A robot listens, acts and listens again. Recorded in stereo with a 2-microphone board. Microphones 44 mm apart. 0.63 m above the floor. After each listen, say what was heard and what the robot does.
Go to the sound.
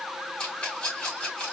The rattle: about 25° left or 155° left. Turn 25° left.
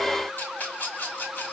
So it is at 130° left. Turn 130° left.
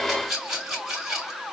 The rattle is now 10° right. Turn 10° right.
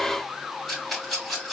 Drive 1.0 m forward.
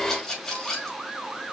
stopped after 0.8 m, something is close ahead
Something is in my way. I am facing the rattle but have not reached it.